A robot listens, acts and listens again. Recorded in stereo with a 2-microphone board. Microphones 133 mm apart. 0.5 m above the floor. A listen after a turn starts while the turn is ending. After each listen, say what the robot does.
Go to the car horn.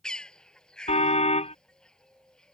Turn 55° left.
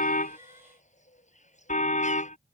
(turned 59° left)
Turn 70° left.
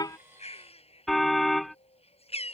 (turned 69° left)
Drive 1.0 m forward.
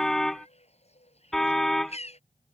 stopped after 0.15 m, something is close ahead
Blocked. The car horn is further on, straight ahead.